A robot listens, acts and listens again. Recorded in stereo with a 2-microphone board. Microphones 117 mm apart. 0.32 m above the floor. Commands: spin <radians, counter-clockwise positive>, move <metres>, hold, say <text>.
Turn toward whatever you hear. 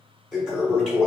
spin -0.52
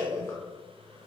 spin 0.52
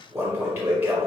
spin -0.35
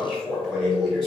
say Found it: a toilet flushing, straight ahead, 1 to 2 m away.